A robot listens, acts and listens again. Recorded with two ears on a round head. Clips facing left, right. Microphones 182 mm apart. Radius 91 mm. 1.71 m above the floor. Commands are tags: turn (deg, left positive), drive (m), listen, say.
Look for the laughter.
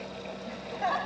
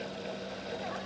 <turn deg="90"/>
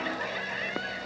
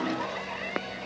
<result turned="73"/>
<turn deg="15"/>
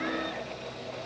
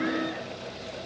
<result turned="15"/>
<listen/>
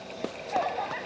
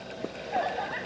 <turn deg="-10"/>
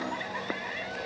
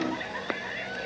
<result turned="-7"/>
<say>Found it: laughter, straight ahead.</say>